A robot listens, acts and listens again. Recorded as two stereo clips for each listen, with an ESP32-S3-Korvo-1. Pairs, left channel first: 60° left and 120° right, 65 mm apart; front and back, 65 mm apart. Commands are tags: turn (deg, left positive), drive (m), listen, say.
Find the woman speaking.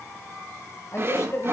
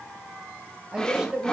<turn deg="105"/>
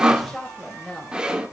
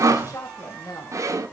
<turn deg="-15"/>
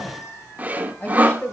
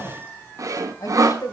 <say>Found it: a woman speaking, straight ahead, 2 to 4 m away.</say>